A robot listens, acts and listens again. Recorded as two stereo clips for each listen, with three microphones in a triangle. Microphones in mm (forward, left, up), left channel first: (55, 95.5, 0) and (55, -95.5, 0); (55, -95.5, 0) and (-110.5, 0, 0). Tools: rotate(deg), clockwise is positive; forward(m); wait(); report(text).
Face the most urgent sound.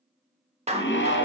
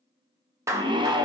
rotate(-85)
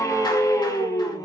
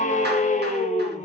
rotate(-15)
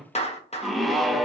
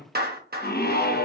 report("Facing the scream, under 1 m away.")